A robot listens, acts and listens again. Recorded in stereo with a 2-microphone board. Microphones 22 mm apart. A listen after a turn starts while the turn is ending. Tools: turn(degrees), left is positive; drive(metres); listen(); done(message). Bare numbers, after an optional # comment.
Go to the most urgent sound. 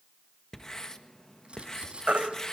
turn(-90)
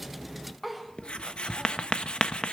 listen()
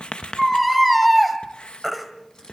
drive(1.0)
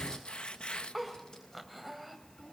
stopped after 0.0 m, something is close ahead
listen()
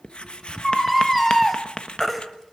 done("Something is in my way. I am facing the baby crying but have not reached it.")